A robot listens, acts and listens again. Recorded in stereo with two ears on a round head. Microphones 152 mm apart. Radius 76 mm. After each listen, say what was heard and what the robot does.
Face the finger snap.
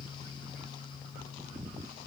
Keep listening.
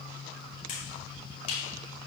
The finger snap: about 45° left or 135° left. Turn 45° left.
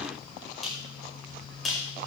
Found it: a finger snap, straight ahead, over 4 m away.